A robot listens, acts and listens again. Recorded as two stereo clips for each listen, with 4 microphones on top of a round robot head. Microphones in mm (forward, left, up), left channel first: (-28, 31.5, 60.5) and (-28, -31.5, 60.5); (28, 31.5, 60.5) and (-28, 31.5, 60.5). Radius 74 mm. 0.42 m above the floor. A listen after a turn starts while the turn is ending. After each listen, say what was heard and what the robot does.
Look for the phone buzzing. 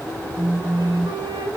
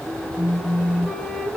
The phone buzzing: 25° right. Turn 25° right.
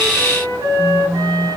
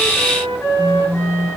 Facing the phone buzzing.